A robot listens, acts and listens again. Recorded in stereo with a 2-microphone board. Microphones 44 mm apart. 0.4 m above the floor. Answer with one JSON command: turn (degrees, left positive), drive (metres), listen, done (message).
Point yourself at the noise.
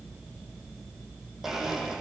{"turn": -30}
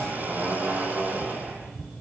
{"turn": -140}
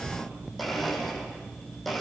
{"done": "Found it: a blender, straight ahead, over 4 m away."}